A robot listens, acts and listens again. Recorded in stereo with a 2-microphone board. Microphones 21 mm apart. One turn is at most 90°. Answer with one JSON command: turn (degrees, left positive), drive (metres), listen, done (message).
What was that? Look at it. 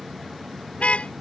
{"turn": 90}
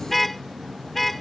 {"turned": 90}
{"turn": 10}
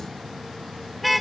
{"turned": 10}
{"done": "Found it: a car horn, straight ahead."}